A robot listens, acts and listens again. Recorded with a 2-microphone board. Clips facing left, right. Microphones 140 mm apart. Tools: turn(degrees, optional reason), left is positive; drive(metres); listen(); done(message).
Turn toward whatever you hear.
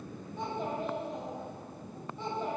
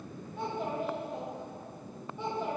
turn(degrees=-30)
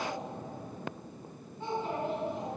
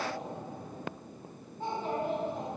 turn(degrees=-135, reason="So it is at 135° right.")
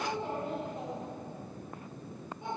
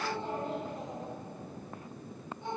turn(degrees=15, reason="The child speaking is now 15° left.")
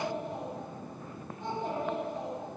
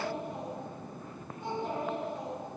done("Facing the child speaking, over 4 m away.")